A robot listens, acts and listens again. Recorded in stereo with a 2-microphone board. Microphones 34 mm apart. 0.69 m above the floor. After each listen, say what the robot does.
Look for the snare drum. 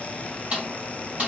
Turn 35° right.
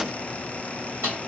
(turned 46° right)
Turn 100° right.
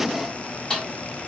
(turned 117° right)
Turn 20° left.
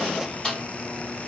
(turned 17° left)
Facing the snare drum.